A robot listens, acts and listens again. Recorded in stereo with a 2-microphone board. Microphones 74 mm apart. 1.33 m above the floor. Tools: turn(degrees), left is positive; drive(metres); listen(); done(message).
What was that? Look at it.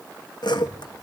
turn(degrees=90)
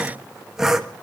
done("Facing the sawing, 1 to 2 m away.")